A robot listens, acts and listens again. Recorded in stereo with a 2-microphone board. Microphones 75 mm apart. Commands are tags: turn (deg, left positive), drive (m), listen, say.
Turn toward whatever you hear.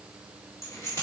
<turn deg="40"/>
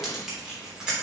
<turn deg="-10"/>
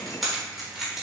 <say>Found it: keys jangling, straight ahead.</say>